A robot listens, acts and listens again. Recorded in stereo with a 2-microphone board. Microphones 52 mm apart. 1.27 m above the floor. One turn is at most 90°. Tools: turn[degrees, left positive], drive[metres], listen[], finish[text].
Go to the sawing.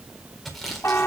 Action: turn[30]
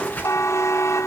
Thought: So it is at 150° left.
Action: turn[90]
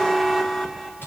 Thought: The sawing is now 50° left.
Action: turn[50]
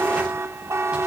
Action: listen[]
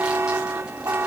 Action: listen[]
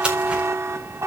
Thought: The sawing is now 20° right.
Action: turn[-20]
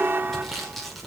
Action: listen[]
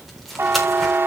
Action: listen[]
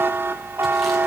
Action: finish[I heard sawing from this way, but can't make it out now. I did not reach it.]